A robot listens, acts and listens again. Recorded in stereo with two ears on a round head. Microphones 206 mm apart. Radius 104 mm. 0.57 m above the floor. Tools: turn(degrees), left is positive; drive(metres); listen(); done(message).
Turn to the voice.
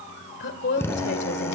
turn(degrees=50)
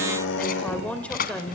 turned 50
done("Facing the woman speaking.")